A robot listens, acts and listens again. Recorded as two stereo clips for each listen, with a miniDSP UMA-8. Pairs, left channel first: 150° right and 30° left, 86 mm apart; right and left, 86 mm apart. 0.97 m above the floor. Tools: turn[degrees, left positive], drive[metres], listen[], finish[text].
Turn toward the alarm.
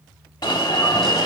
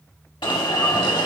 Thought: The alarm: 110° right.
Action: turn[-110]
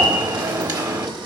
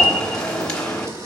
Thought: The alarm is now 10° right.
Action: turn[-10]
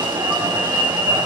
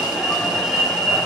Action: finish[Facing the alarm, 1 to 2 m away.]